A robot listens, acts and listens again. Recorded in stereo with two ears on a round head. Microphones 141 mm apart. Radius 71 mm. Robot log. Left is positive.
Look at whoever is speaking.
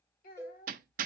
note: The child speaking: about 55° left or 125° left.
cmd yaw +55
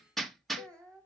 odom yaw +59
end: Found it: a child speaking, straight ahead.